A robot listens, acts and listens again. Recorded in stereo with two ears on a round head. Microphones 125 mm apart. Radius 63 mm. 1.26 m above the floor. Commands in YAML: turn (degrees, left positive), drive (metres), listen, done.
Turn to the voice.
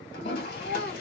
turn: 90
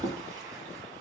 listen: true
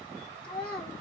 done: "Facing the child speaking."